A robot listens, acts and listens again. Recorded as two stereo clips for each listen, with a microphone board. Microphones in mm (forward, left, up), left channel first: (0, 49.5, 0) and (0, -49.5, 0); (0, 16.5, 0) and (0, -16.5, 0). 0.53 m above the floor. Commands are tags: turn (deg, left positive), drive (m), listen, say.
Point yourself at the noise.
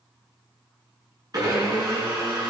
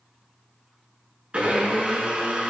<turn deg="-40"/>
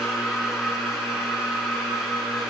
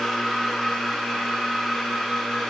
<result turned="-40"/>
<say>Facing the blender.</say>